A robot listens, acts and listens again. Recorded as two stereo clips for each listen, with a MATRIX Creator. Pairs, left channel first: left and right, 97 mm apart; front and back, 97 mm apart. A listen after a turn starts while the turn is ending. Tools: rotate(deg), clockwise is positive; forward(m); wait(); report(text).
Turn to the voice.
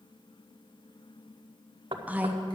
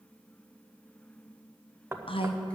rotate(15)
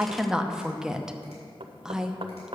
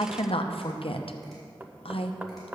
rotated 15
report("Facing the woman speaking.")